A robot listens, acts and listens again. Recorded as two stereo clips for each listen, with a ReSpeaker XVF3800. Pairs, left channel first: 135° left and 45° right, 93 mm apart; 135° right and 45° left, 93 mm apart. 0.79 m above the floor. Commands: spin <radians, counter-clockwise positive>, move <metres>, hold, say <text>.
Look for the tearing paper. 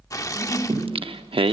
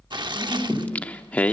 spin 1.40
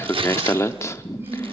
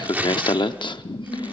spin -0.44
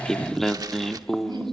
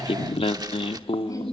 hold
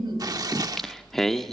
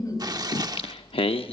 say Found it: tearing paper, straight ahead.